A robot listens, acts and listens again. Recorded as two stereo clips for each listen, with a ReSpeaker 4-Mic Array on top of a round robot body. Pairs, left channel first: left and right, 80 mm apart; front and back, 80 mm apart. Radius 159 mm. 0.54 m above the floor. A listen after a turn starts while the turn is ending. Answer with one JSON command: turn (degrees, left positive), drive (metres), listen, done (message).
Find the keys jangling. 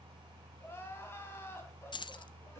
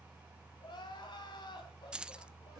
{"turn": 100}
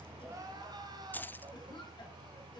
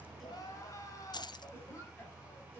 {"turn": 20}
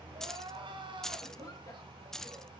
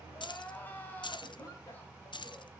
{"done": "Found it: keys jangling, straight ahead, under 1 m away."}